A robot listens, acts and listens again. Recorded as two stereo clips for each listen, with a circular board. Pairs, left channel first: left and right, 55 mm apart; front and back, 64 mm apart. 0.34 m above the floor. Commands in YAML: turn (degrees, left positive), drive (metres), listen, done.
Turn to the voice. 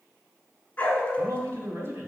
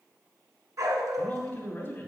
turn: -55
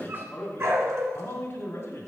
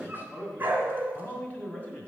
turn: 60
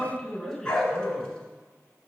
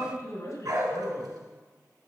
done: "Facing the man speaking."